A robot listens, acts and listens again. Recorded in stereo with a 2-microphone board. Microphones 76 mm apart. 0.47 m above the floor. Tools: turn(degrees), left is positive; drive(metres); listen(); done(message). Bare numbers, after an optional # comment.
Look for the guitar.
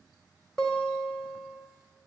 turn(30)
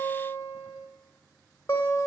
# So it is at 140° left.
turn(140)
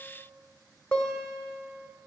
# The guitar is now 15° left.
turn(15)
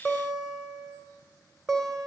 done("Facing the guitar, 2 to 4 m away.")